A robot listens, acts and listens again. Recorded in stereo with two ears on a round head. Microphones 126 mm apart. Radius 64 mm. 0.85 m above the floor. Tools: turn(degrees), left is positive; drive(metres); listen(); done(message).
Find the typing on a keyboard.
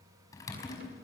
turn(degrees=25)
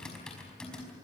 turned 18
done("Found it: typing on a keyboard, straight ahead.")